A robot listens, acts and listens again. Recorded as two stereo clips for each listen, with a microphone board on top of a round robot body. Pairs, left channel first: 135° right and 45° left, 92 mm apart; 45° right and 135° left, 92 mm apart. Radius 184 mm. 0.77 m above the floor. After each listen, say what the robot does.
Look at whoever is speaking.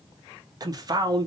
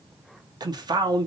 Turn 90° left.
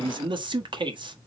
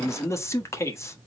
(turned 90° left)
Turn 15° left.
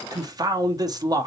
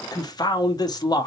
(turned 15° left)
Facing the man speaking, 1 to 2 m away.